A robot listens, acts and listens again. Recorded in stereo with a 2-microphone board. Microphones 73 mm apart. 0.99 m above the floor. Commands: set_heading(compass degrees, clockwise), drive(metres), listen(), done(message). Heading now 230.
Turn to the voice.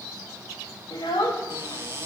set_heading(160)
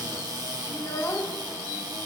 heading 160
set_heading(120)
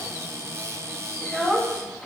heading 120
done("Facing the child speaking.")